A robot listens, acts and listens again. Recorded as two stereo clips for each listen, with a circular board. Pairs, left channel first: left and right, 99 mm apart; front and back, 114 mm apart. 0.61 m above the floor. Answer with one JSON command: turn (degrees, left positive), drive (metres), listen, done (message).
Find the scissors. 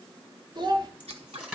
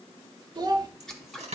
{"turn": -85}
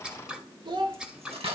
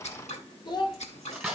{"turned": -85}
{"turn": -10}
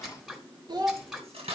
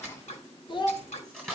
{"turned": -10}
{"done": "Facing the scissors."}